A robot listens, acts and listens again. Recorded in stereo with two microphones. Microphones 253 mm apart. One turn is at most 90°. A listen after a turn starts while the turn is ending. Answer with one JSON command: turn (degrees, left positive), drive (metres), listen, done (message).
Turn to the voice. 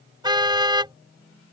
{"listen": true}
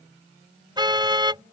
{"listen": true}
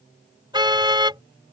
{"done": "I can't make out anyone speaking to turn to."}